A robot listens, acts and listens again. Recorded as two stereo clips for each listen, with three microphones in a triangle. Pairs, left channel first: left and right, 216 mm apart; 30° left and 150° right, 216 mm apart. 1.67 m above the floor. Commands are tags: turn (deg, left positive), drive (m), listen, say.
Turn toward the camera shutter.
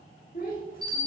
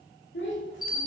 <listen/>
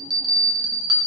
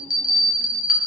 <listen/>
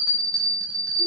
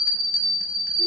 <say>I can't make out a camera shutter to turn to.</say>